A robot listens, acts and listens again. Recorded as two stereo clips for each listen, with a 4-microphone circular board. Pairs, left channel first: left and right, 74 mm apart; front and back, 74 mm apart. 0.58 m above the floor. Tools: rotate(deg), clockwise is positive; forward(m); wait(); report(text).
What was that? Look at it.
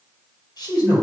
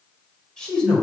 rotate(-85)
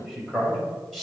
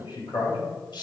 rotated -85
rotate(-10)
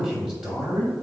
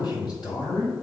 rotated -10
report("Found it: a man speaking, straight ahead.")